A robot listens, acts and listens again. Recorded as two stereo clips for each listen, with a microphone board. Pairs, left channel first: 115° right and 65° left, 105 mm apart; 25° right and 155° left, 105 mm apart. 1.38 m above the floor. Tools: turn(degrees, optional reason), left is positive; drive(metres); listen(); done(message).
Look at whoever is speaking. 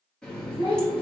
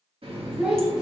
turn(degrees=-120, reason="The child speaking: 120° right.")
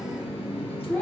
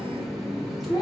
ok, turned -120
turn(degrees=-45, reason="The child speaking is now 45° right.")
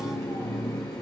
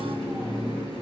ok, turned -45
listen()
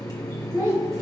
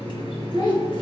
turn(degrees=10, reason="The child speaking is now 10° left.")
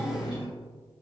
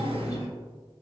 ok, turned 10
listen()
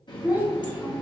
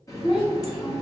done("Facing the child speaking.")